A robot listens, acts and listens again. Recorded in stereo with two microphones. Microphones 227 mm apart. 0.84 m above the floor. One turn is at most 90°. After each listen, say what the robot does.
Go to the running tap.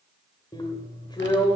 Keep listening.
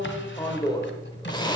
Keep listening.
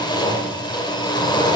I can't make out a running tap to turn to.